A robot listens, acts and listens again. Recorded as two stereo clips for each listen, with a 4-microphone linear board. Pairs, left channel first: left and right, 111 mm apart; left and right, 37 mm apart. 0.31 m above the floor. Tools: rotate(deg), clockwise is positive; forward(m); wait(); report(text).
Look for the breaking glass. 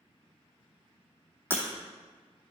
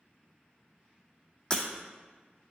rotate(-20)
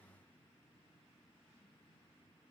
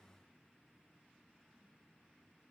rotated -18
wait()
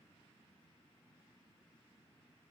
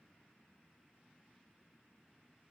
report("I heard breaking glass, but can't make it out now. It was about 5° left or 140° left.")